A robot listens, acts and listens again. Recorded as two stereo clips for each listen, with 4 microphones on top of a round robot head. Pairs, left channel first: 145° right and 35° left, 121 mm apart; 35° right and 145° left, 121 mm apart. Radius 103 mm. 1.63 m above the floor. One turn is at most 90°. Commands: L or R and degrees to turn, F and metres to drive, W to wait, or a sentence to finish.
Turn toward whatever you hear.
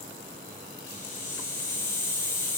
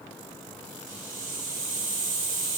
L90
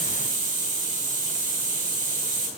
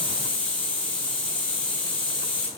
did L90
L45
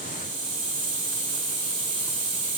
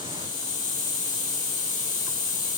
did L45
L20
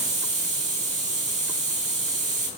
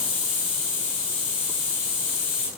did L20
L10
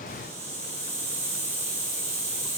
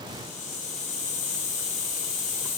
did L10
Facing the hiss, over 4 m away.